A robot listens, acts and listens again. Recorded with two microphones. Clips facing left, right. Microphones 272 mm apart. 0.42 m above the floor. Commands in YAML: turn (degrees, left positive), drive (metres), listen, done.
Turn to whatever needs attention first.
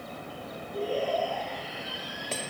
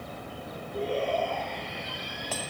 turn: 30
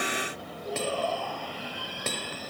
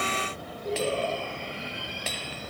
turn: -25
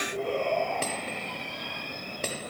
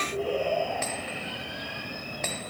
turn: -10
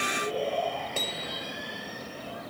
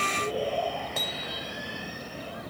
done: "Facing the shout."